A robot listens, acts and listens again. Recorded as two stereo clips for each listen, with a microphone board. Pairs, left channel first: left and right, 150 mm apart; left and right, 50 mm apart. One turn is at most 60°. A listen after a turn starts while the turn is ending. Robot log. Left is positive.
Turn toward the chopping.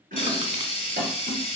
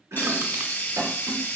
note: The chopping: about 70° right or 110° right.
cmd yaw -60
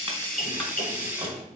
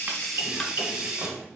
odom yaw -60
note: So it is at 40° right.
cmd yaw -40
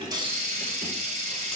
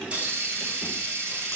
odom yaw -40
cmd idle
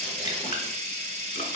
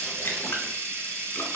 cmd idle
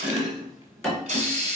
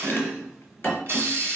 end: Facing the chopping, 2 to 4 m away.